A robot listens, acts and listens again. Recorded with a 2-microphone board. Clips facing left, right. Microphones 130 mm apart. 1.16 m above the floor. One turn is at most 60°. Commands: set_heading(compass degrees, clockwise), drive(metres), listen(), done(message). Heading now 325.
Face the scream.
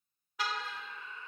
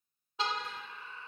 set_heading(355)
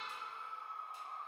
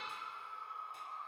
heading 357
done("Facing the scream.")